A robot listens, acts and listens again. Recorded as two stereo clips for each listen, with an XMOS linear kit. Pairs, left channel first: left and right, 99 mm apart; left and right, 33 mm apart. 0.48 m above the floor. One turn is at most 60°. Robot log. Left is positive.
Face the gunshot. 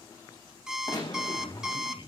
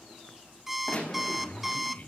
note: The gunshot: about 45° left or 135° left.
cmd yaw +45
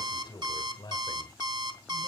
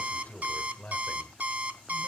cmd idle
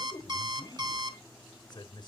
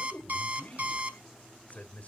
end: I heard a gunshot, but can't make it out now. It was about straight ahead or 90° left.